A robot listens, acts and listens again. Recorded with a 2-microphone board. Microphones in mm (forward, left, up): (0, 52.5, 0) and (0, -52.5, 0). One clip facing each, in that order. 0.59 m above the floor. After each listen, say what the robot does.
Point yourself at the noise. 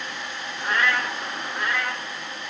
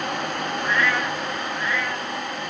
Turn 70° left.
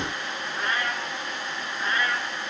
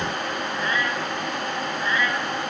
Turn 30° left.
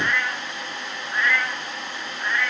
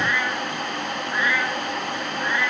Turn 10° right.
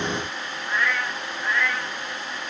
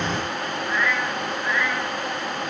Facing the cat meowing, over 4 m away.